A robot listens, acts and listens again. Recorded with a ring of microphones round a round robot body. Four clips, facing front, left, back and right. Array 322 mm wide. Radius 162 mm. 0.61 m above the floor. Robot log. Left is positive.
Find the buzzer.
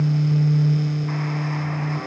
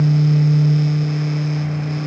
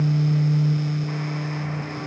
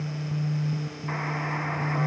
cmd idle
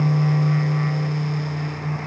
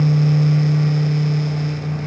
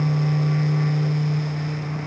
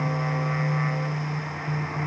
cmd idle
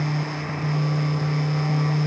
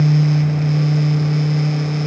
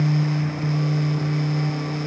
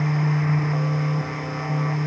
end: I can't make out a buzzer to turn to.